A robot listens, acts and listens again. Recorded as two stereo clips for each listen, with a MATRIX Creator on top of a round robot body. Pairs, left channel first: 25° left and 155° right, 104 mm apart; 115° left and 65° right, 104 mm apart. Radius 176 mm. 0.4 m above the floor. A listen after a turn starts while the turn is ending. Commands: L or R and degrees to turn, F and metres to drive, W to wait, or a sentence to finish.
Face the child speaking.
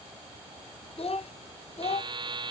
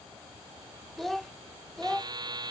L30
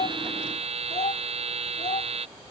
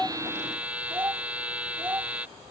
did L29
Facing the child speaking.